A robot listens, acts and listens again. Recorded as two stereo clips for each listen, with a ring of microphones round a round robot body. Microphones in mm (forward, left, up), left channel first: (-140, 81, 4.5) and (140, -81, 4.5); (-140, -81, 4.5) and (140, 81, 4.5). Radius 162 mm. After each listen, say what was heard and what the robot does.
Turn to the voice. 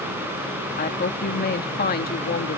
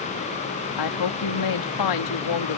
The woman speaking: 150° right. Turn 150° right.
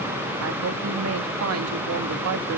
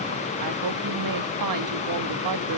The woman speaking is now 10° left. Turn 10° left.
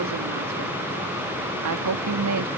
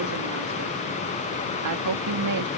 Facing the woman speaking.